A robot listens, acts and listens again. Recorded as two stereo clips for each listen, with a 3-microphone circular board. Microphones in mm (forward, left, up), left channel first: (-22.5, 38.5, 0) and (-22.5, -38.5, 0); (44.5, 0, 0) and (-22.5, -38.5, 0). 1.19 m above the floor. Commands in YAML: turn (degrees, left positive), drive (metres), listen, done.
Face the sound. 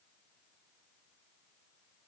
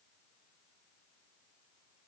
listen: true
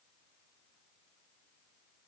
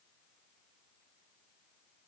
listen: true
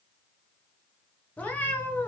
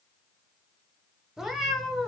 turn: 105
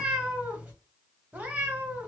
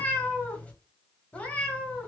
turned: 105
turn: -35
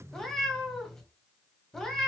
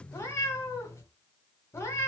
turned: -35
turn: 10
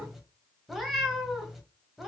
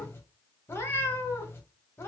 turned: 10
done: "Facing the cat meowing, 1 to 2 m away."